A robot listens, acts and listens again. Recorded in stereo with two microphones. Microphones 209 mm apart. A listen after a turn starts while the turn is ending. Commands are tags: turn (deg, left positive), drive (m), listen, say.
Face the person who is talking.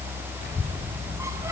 <turn deg="50"/>
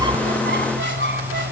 <listen/>
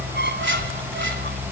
<say>Facing the child speaking.</say>